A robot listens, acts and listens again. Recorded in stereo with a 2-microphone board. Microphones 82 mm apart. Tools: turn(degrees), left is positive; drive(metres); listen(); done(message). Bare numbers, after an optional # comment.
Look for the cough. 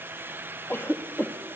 # The cough: about 30° left or 150° left.
turn(30)
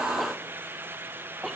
done("Facing the cough.")